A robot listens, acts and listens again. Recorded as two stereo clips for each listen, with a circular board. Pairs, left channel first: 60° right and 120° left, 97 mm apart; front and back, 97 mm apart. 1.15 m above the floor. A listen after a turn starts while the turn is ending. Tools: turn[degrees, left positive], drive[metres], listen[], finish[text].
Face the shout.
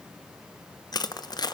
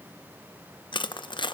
Action: listen[]
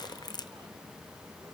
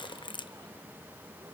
Action: listen[]
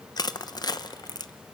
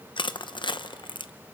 Action: finish[I can't make out a shout to turn to.]